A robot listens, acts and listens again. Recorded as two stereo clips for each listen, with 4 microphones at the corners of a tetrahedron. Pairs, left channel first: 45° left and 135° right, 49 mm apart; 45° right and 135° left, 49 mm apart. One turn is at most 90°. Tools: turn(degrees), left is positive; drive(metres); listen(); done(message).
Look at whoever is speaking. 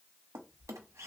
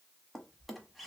listen()
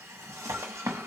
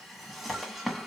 listen()
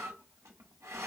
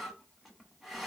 done("I can't make out anyone speaking to turn to.")